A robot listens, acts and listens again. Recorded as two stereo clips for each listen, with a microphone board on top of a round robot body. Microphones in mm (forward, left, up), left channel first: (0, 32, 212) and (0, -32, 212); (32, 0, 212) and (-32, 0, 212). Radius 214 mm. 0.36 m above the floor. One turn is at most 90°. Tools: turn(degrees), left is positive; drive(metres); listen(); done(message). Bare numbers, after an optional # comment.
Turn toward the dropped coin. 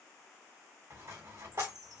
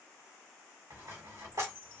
# The dropped coin: 140° right.
turn(-90)
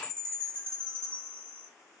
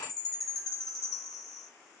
# Nothing new. It was at 50° right.
turn(-50)
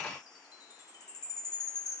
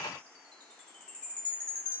done("I heard a dropped coin from this way, but can't make it out now.")